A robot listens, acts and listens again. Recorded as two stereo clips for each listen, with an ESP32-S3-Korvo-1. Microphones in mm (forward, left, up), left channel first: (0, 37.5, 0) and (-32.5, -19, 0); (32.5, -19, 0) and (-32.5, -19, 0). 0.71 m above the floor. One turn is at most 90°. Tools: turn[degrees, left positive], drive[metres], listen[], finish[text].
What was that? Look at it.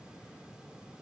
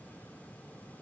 Action: listen[]
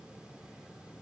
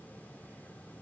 Action: listen[]
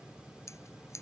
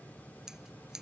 Thought: The scissors: 100° left.
Action: turn[90]
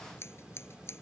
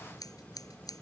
Thought: The scissors is now 15° left.
Action: turn[15]
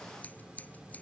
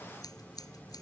Action: finish[Facing the scissors.]